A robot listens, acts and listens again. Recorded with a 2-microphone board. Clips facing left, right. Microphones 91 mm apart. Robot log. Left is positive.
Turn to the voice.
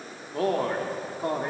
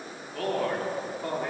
note: The man speaking: about 30° left or 150° left.
cmd yaw +30
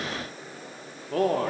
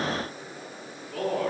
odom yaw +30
note: So it is at 120° left.
cmd yaw +120
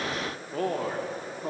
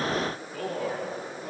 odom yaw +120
note: The man speaking is now 40° left.
cmd yaw +40
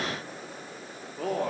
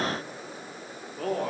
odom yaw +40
end: Found it: a man speaking, straight ahead.